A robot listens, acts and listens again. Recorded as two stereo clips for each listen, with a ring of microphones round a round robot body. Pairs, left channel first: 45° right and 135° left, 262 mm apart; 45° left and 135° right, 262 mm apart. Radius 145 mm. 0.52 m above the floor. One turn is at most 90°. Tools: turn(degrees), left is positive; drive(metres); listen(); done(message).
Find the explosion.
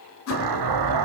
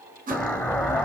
turn(degrees=90)
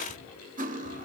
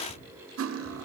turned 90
turn(degrees=40)
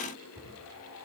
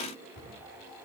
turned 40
done("I heard an explosion from this way, but can't make it out now.")